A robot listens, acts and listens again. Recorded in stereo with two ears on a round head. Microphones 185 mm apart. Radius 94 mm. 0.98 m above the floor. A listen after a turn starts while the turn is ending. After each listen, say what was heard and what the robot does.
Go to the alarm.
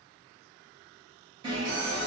The alarm: about 25° right or 155° right. Turn 25° right.
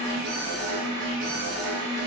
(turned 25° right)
So it is at 125° right. Turn 125° right.
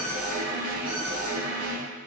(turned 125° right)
The alarm is now 30° left. Turn 30° left.
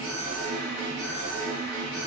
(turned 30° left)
The alarm is now 15° left. Turn 15° left.
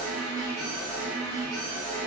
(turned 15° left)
Drive 1.0 m forward.
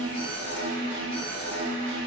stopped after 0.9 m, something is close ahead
The alarm is now 10° left. Turn 10° left.
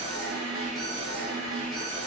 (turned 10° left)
I am next to the alarm.